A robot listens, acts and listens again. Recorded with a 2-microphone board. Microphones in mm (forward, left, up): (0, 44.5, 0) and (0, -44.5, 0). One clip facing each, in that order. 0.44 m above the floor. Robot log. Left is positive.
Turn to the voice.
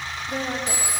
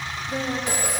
note: The woman speaking: about 45° left or 135° left.
cmd yaw +45
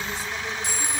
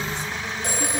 cmd idle
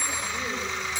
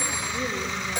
cmd idle
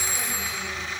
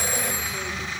end: I heard a woman speaking, but can't make it out now. It was about straight ahead or 90° left.